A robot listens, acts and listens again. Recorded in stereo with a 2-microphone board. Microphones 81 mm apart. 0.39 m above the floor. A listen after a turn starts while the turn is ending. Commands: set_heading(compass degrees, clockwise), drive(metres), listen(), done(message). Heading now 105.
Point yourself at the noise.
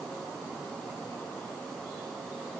listen()
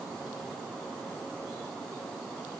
listen()
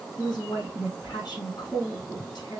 set_heading(45)
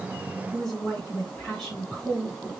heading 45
done("Found it: a woman speaking, straight ahead.")